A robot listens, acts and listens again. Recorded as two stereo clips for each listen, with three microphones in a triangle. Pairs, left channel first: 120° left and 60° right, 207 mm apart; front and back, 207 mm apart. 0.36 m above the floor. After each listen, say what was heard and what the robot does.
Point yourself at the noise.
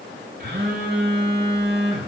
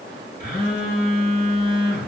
The phone buzzing: 35° right. Turn 35° right.
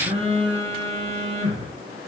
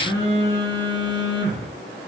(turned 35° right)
Found it: a phone buzzing, straight ahead, 1 to 2 m away.